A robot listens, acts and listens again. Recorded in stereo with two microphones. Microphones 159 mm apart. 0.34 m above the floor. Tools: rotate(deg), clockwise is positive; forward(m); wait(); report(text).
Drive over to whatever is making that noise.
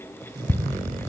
rotate(-15)
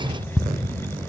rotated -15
forward(1.0)
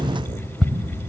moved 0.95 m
forward(1.0)
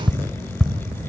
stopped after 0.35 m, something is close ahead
report("I am next to the ticking.")